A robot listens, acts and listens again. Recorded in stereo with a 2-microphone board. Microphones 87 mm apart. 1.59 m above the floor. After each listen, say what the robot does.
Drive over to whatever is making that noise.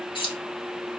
Turn 90° left.
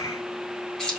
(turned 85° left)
Turn 10° left.
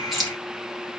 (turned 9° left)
Drive 1.0 m forward.
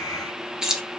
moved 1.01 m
Turn 10° right.
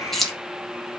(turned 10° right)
Drive 1.0 m forward.
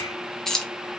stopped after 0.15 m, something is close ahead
I am next to the keys jangling.